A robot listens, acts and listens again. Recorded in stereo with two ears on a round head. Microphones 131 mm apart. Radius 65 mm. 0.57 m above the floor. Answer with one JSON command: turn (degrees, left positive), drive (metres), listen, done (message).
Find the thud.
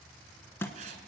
{"turn": 15}
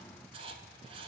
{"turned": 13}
{"listen": true}
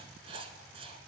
{"done": "I heard a thud, but can't make it out now. It was about 5° left or 150° left."}